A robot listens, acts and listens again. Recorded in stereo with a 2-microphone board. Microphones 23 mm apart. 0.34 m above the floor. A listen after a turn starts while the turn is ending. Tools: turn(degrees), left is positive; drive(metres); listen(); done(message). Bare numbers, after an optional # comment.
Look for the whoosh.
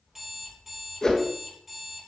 # The whoosh: about 30° left or 150° left.
turn(30)
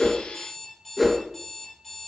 done("Facing the whoosh, 1 to 2 m away.")